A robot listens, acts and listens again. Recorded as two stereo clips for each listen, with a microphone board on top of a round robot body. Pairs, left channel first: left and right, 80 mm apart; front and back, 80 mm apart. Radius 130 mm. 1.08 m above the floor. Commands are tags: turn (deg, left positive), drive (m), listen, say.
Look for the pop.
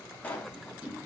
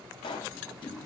<turn deg="20"/>
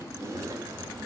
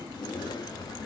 <say>Facing where the pop came from. I can't hear it now.</say>